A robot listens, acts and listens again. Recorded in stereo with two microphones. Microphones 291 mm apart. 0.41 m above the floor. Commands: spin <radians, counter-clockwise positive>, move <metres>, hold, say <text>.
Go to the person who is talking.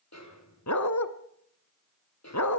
hold
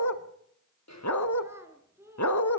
spin -0.52
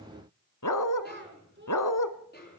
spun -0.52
spin -2.44
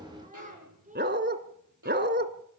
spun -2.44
spin -0.44
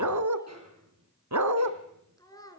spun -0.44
spin 0.17
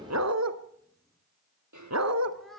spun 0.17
move 1.0
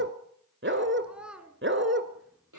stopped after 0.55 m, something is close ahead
say Blocked. The child speaking is further on, straight ahead.